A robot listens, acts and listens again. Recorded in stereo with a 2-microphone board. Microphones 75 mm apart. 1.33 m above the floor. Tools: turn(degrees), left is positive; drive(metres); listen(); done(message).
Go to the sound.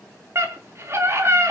turn(degrees=-40)
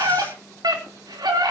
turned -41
turn(degrees=-100)
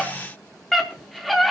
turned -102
drive(metres=1.0)
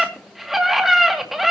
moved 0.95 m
drive(metres=1.0)
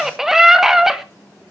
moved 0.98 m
drive(metres=1.0)
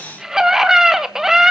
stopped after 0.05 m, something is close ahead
turn(degrees=-10)
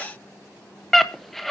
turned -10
done("I am next to the scream.")